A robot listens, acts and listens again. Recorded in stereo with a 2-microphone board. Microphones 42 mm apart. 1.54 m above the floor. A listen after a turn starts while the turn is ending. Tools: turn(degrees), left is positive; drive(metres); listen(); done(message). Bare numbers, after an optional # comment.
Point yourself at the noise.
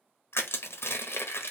turn(90)
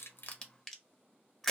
done("Found it: crushing, straight ahead, under 1 m away.")